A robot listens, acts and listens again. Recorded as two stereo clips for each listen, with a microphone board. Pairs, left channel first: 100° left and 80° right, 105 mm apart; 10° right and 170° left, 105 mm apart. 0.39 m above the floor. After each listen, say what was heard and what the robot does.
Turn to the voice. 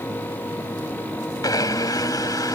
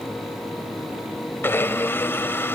Keep listening.
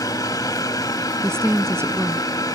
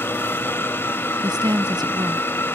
The woman speaking: 145° right. Turn 145° right.
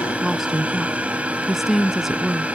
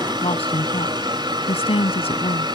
Found it: a woman speaking, straight ahead.